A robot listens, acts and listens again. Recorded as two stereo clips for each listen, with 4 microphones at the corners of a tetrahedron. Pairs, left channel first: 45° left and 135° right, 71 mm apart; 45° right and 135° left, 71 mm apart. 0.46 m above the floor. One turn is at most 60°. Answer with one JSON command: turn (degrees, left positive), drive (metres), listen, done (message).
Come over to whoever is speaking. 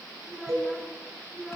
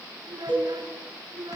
{"turn": 60}
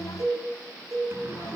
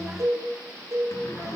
{"turn": 60}
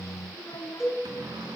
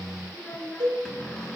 {"turn": 25}
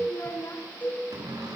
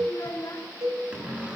{"drive": 1.0}
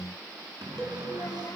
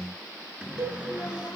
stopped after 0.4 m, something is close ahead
{"listen": true}
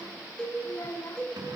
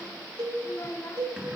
{"done": "Something is in my way. I am facing the child speaking but have not reached it."}